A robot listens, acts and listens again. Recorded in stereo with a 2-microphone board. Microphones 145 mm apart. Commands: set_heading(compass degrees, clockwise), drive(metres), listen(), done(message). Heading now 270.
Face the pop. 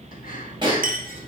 set_heading(305)
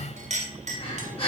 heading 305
listen()
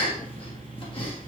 done("I heard a pop, but can't make it out now. It was about straight ahead or 110° right.")